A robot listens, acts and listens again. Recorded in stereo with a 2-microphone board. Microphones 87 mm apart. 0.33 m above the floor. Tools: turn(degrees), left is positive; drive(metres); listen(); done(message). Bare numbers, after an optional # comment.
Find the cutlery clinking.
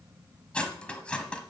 turn(30)
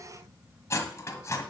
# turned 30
# So it is at 135° left.
turn(135)
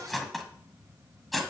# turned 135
done("Found it: cutlery clinking, straight ahead.")